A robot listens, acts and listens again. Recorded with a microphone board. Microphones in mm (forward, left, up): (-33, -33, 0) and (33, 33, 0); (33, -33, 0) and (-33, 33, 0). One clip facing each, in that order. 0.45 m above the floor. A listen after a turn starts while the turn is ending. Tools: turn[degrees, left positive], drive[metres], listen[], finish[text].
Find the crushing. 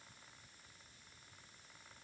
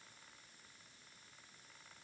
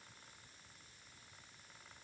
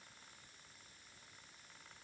Action: listen[]
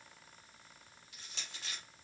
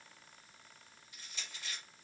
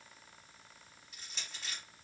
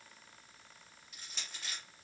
Thought: The crushing: 135° right.
Action: turn[-135]
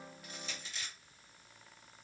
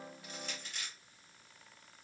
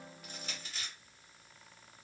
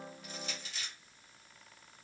Action: finish[Found it: crushing, straight ahead.]